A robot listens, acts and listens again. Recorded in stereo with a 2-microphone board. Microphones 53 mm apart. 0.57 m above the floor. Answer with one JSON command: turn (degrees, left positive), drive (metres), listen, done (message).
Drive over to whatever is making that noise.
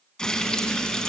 {"turn": 30}
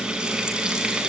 {"turn": -15}
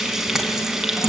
{"turn": -10}
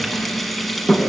{"drive": 1.0}
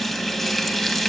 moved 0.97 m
{"drive": 1.0}
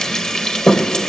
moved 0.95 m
{"turn": 10}
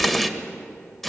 {"drive": 1.0}
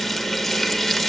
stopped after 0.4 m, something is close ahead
{"done": "Arrived at the frying, straight ahead."}